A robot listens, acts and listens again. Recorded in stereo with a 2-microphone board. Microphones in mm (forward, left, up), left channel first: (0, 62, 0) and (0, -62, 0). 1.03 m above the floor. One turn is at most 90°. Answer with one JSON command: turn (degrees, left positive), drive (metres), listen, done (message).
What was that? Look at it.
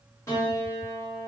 {"turn": 20}
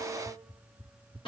{"turn": 90}
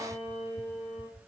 {"turn": 75}
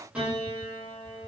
{"turn": -10}
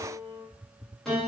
{"done": "Facing the piano, 1 to 2 m away."}